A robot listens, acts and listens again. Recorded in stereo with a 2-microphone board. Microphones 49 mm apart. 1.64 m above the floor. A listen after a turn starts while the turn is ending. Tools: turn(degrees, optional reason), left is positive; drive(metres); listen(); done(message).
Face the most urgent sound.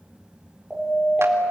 turn(degrees=30)
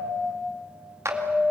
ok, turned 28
turn(degrees=-30, reason="So it is at 30° right.")
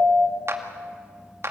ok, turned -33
done("Found it: a siren, straight ahead.")